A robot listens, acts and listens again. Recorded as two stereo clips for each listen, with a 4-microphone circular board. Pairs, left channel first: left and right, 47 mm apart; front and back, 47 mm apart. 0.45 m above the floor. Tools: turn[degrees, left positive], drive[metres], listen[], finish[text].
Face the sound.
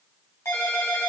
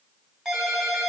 Thought: The ringtone: 105° left.
Action: turn[105]
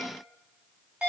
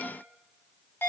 Thought: The ringtone is now 25° right.
Action: turn[-25]
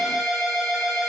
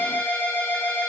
Action: finish[Facing the ringtone.]